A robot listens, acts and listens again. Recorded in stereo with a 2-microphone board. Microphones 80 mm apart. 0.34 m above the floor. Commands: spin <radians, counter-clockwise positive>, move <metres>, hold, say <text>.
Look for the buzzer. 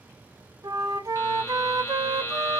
spin 0.52
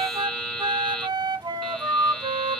say Facing the buzzer.